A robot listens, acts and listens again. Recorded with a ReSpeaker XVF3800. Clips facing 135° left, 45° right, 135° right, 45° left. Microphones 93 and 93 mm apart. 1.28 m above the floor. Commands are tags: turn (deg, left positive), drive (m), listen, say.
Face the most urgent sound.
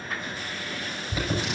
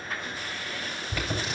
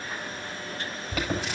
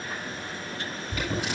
<turn deg="-150"/>
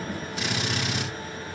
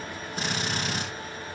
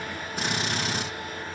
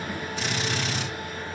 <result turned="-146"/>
<listen/>
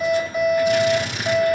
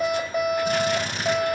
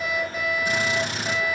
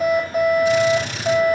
<say>Facing the alarm.</say>